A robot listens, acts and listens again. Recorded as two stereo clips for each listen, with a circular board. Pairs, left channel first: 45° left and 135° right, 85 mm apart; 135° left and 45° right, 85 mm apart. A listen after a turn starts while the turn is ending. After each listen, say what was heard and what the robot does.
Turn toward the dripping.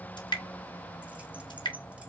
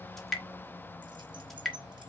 The dripping: 50° left. Turn 50° left.
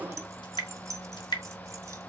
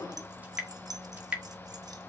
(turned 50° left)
The dripping is now 25° left. Turn 25° left.
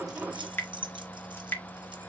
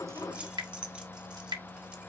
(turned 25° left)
The dripping is now 15° right. Turn 15° right.
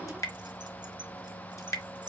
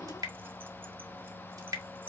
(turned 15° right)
Found it: dripping, straight ahead.